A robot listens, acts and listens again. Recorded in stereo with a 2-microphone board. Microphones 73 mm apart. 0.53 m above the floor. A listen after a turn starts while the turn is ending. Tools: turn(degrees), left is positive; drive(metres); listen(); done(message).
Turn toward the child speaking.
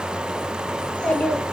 turn(degrees=20)
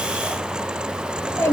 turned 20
turn(degrees=140)
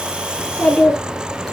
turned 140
done("Facing the child speaking, over 4 m away.")